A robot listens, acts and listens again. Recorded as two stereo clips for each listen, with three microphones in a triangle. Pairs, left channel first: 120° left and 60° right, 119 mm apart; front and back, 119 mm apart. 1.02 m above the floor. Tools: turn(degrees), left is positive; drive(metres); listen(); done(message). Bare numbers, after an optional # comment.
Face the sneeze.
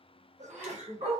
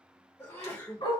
# The sneeze: 70° right.
turn(-70)
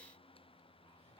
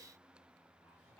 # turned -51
# Nothing new. It was at 20° right.
turn(-20)
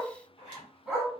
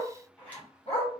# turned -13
done("I heard a sneeze from this way, but can't make it out now.")